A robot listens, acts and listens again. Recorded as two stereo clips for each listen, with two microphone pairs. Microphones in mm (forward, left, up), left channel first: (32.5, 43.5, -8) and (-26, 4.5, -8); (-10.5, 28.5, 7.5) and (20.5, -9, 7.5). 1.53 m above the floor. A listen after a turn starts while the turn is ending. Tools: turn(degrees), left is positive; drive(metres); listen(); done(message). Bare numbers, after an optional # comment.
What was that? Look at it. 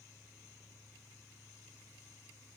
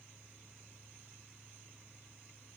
listen()
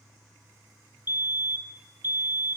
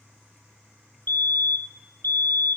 # The fire alarm: 160° left.
turn(160)
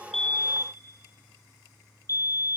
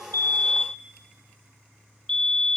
# The fire alarm is now 60° left.
turn(60)
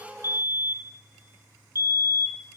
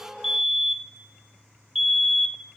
# The fire alarm is now 30° left.
turn(30)
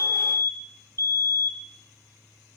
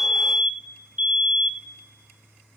done("Facing the fire alarm.")